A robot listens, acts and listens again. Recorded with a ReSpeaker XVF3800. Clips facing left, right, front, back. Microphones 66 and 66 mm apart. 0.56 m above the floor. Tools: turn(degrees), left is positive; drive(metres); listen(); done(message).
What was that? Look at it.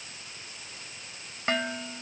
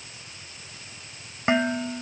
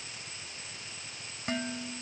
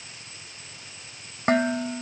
turn(degrees=-160)
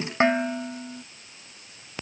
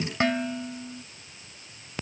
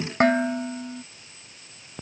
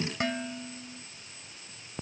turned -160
turn(degrees=30)
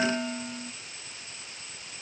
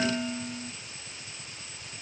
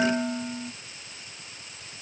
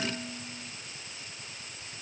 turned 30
turn(degrees=20)
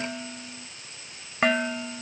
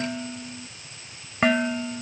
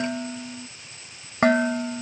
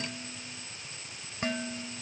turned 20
done("Found it: dishes clattering, straight ahead.")